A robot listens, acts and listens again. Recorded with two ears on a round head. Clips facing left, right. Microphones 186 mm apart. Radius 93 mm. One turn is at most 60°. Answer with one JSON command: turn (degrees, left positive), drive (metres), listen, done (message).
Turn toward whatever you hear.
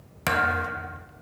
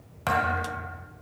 {"turn": 30}
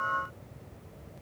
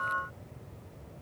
{"listen": true}
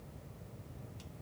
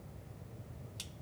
{"done": "I heard a thud, but can't make it out now. It was about straight ahead or 120° left."}